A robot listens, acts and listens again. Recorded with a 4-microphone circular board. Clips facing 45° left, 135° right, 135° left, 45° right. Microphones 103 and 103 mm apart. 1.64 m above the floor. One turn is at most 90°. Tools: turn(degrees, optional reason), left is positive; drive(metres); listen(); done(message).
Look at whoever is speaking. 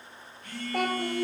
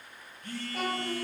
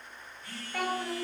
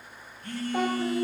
turn(degrees=25, reason="The child speaking: 25° left.")
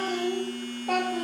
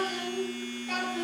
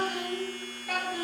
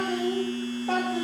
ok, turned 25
turn(degrees=15, reason="The child speaking is now 15° left.")
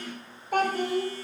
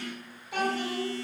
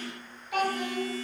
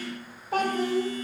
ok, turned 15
turn(degrees=10, reason="The child speaking is now 10° left.")
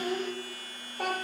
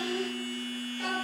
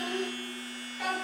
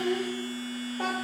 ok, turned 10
turn(degrees=10, reason="The child speaking is now 10° left.")
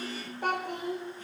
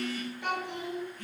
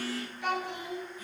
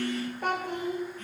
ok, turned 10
done("Facing the child speaking, 2 to 4 m away.")